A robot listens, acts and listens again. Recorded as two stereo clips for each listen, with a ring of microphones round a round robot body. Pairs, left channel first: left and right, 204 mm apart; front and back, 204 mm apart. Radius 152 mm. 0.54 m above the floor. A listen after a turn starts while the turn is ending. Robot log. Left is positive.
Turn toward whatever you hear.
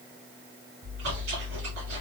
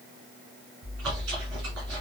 note: The chewing: 140° right.
cmd yaw -140
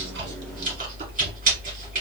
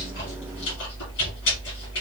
note: The chewing is now 40° right.
cmd yaw -40
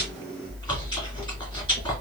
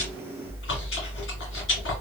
note: The chewing is now 20° left.
cmd yaw +20
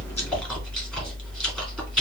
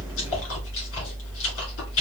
end: Facing the chewing.